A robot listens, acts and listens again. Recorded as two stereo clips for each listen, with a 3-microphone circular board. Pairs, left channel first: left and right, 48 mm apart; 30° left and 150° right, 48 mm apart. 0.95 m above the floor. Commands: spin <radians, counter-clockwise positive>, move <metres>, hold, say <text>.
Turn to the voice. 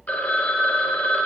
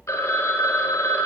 hold
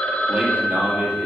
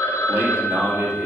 spin -2.62
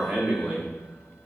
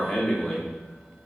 spin -1.05
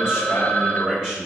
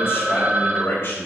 spin -0.17
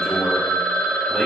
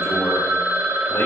say Facing the man speaking, over 4 m away.